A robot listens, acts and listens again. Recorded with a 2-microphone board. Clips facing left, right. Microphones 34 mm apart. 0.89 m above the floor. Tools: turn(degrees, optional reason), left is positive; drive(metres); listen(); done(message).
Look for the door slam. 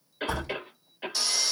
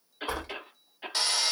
turn(degrees=-20, reason="The door slam: about 20° right or 160° right.")
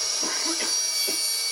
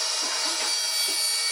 listen()
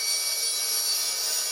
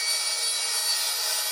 done("I heard a door slam, but can't make it out now. It was about straight ahead or 140° right.")